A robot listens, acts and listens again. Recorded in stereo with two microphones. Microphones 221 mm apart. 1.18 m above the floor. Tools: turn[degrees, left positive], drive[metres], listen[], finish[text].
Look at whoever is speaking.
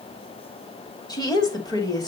Thought: The woman speaking: about 15° left or 165° left.
Action: turn[15]
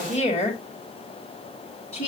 Thought: So it is at 150° left.
Action: turn[150]
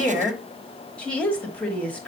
Action: finish[Facing the woman speaking, 2 to 4 m away.]